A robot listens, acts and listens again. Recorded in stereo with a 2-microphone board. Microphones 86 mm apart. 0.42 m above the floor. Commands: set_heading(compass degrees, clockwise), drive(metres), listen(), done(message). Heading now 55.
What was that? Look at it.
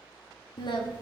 set_heading(345)
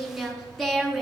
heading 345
done("Facing the singing.")